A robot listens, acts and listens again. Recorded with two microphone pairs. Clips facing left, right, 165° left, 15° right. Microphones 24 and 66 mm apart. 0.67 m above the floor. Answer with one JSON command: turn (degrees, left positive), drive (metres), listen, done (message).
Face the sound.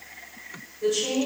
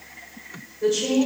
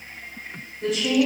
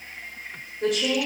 {"turn": -30}
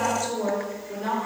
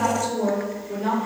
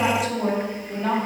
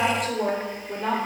{"done": "Found it: a woman speaking, straight ahead."}